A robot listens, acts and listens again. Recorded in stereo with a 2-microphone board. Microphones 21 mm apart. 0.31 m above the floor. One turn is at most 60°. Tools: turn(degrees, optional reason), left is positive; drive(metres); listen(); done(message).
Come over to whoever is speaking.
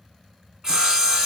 listen()
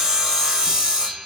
listen()
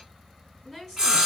turn(degrees=30)
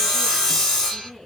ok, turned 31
turn(degrees=60, reason="So it is at 145° left.")
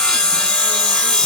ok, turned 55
turn(degrees=60, reason="Nothing new. It was at 90° left.")
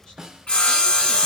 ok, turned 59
turn(degrees=30, reason="Nothing new. It was at 30° left.")
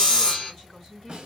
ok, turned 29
drive(metres=1.0)
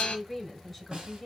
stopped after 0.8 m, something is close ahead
done("I am next to the woman speaking.")